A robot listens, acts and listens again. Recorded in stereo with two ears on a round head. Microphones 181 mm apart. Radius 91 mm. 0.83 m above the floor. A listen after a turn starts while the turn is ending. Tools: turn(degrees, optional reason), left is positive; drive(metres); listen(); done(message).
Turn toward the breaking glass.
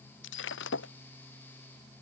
turn(degrees=65, reason="The breaking glass: about 65° left or 115° left.")
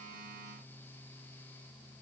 listen()
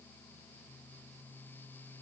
done("I heard breaking glass, but can't make it out now. It was about straight ahead or 50° left.")